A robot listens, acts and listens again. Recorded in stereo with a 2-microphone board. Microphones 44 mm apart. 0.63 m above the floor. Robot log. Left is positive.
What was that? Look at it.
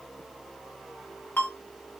note: The ringtone: about 50° left or 130° left.
cmd yaw +50
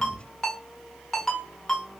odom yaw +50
note: So it is at 15° left.
cmd yaw +15
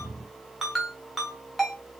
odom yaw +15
end: Facing the ringtone.